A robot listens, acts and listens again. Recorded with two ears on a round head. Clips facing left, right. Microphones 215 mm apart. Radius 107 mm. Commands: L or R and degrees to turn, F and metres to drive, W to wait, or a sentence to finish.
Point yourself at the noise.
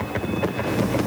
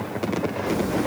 W
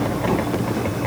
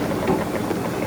R30
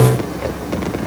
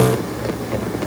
R135
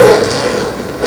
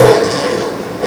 L10
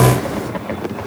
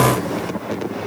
W
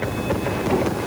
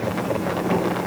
Found it: a zipper, straight ahead.